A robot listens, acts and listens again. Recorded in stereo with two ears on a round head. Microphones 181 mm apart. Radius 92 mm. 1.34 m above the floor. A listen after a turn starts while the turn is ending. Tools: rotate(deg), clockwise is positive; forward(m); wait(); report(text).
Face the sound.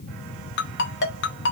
rotate(-55)
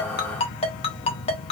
rotate(-35)
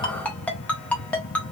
rotate(-10)
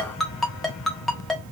report("Found it: a ringtone, straight ahead.")